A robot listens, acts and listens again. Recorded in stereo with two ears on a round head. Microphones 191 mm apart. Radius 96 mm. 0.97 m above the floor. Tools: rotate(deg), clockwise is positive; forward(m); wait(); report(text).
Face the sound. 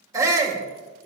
rotate(30)
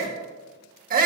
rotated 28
rotate(135)
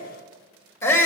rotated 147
rotate(-15)
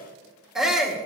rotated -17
report("Facing the shout.")